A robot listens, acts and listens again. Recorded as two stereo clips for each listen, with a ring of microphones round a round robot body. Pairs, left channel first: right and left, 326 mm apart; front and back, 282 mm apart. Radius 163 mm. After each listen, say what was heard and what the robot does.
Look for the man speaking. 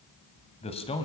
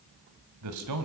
The man speaking: 165° right. Turn 165° right.
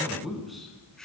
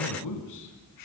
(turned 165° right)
Found it: a man speaking, straight ahead.